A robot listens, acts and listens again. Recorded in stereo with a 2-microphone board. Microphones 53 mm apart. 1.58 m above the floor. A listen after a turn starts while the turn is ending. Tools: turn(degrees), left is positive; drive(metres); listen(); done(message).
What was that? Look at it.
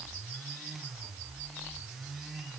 listen()
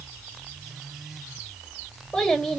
turn(degrees=30)
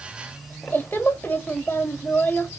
turn(degrees=135)
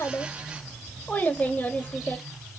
turn(degrees=30)
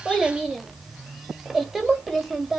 done("Found it: a child speaking, straight ahead.")